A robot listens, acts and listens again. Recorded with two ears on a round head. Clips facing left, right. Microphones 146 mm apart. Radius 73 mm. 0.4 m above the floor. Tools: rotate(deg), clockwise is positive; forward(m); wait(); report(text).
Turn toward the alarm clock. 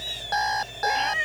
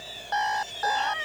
rotate(-40)
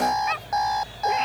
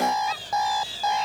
report("Facing the alarm clock.")